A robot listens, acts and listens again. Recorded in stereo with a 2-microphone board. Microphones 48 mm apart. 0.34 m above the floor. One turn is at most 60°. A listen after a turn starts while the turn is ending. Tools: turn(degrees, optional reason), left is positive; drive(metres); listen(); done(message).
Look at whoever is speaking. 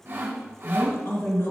turn(degrees=55, reason="The woman speaking: about 55° left or 125° left.")
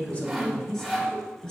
turn(degrees=20, reason="So it is at 20° left.")
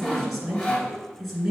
done("Facing the woman speaking, 1 to 2 m away.")